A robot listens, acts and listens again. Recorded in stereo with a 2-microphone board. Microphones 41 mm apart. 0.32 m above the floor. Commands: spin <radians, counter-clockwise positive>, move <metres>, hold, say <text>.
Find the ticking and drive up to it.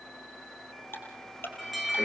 spin 1.13
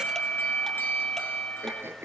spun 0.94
hold
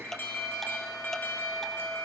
spin 0.17
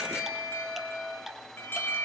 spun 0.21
move 1.0
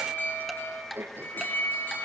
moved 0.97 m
move 1.0
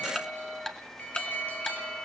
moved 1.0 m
spin 0.17
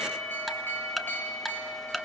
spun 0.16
move 1.0
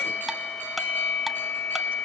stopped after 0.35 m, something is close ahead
hold
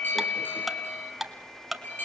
say I am next to the ticking.